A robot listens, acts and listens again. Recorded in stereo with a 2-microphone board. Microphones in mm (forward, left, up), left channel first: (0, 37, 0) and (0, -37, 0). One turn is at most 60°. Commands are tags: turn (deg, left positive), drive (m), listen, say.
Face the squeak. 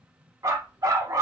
<listen/>
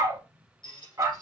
<turn deg="60"/>
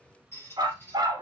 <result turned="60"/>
<turn deg="30"/>
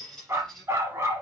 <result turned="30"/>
<say>Facing the squeak, 2 to 4 m away.</say>